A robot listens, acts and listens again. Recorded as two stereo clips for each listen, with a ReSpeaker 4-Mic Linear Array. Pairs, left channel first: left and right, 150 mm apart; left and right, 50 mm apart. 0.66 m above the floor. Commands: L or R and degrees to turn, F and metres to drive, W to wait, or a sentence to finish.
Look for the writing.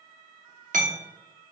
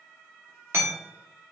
W
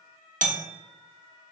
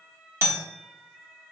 W
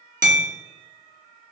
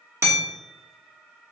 I can't make out writing, only hammering.